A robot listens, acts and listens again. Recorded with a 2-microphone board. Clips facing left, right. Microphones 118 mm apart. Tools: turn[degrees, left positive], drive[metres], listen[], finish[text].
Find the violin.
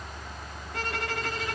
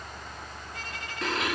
Action: turn[90]
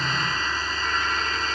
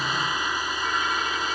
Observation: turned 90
Action: listen[]
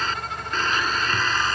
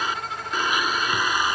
Action: listen[]
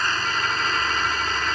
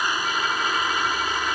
Action: finish[I heard a violin from this way, but can't make it out now.]